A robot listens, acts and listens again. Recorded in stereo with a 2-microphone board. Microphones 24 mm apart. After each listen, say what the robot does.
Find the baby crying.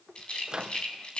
Keep listening.
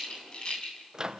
Keep listening.
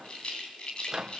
I can't make out a baby crying, only a rattle and a microwave.